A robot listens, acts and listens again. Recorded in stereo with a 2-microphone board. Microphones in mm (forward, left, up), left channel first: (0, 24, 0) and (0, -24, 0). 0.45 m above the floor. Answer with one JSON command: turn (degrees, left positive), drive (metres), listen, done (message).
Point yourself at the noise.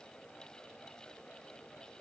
{"listen": true}
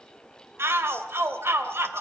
{"turn": -55}
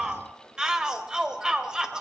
{"turn": -20}
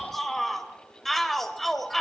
{"done": "Found it: a shout, straight ahead."}